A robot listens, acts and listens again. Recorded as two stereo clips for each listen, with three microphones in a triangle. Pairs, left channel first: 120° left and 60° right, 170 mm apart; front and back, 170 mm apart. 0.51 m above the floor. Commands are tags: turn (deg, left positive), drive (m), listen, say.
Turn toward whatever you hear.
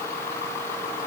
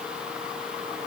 <listen/>
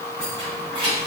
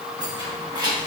<turn deg="-115"/>
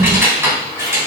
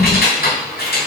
<turn deg="15"/>
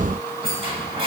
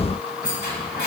<say>Facing the keys jangling, 2 to 4 m away.</say>